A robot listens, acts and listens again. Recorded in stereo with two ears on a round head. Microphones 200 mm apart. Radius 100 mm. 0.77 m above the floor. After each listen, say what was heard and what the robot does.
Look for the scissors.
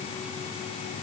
Keep listening.
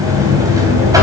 Keep listening.
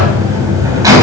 I can't make out scissors, only a buzzer.